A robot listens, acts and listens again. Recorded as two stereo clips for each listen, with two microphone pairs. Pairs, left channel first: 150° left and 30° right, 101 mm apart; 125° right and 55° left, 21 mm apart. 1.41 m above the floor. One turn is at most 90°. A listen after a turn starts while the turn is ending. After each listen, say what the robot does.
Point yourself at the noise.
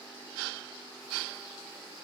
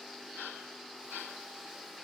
Keep listening.
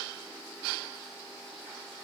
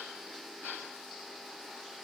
Keep listening.
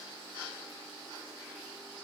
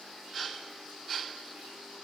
I can't make out anything to turn to.